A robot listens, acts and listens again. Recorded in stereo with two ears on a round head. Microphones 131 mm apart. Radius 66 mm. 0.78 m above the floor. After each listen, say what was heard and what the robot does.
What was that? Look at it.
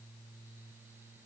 Keep listening.
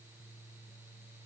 Keep listening.
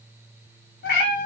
The cat meowing: about 75° left or 105° left. Turn 75° left.
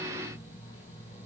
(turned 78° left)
Keep listening.
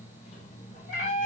So it is at 55° left. Turn 55° left.
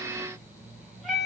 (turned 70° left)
Found it: a cat meowing, straight ahead, 1 to 2 m away.